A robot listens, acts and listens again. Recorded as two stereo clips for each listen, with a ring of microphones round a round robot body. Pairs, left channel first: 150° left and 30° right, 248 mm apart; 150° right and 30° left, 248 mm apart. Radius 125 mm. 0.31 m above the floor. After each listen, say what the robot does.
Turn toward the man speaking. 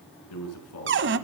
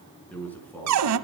Turn 130° left.
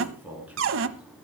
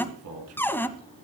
Turn 55° left.
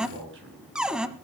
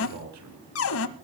Turn 10° left.
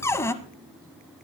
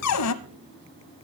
Keep listening.
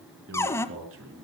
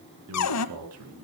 Facing the man speaking.